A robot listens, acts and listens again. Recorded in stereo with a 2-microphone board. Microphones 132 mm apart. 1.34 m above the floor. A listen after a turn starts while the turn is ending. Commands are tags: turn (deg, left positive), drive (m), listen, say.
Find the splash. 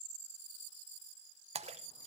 <turn deg="-55"/>
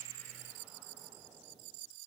<listen/>
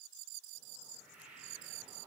<say>I heard a splash, but can't make it out now. It was about straight ahead or 70° right.</say>